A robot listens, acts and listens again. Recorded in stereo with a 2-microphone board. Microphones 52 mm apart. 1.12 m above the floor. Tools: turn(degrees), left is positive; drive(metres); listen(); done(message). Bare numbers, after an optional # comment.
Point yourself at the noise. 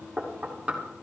# The knocking: about 20° right or 160° right.
turn(-20)
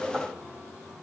listen()
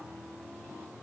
listen()
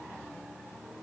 done("I heard knocking, but can't make it out now. It was about straight ahead or 140° right.")